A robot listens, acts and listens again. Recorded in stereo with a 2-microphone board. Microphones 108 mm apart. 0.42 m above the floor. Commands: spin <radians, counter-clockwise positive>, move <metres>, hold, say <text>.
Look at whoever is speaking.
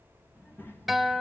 spin 0.35
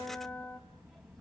say Found it: a child speaking, straight ahead, 1 to 2 m away.